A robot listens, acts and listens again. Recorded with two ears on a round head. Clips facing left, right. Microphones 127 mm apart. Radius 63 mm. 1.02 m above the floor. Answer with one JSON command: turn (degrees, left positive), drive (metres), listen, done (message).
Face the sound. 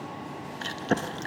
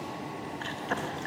{"turn": 45}
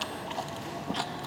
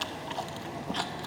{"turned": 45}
{"done": "Found it: chewing, straight ahead."}